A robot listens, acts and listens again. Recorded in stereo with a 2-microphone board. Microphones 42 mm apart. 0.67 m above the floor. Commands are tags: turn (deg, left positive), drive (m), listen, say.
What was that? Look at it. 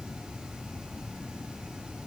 <listen/>
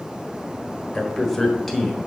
<turn deg="30"/>
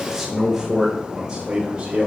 <turn deg="-30"/>
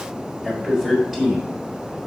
<turn deg="-10"/>
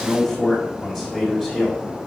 <say>Facing the man speaking.</say>